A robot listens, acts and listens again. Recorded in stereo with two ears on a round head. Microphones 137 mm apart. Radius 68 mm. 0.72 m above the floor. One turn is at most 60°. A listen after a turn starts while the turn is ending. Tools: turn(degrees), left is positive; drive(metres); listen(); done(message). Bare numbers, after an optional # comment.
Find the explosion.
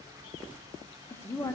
listen()
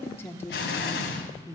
turn(60)
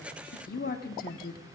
# Nothing new. It was at 30° left.
turn(30)
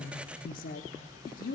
done("Facing where the explosion came from. I can't hear it now.")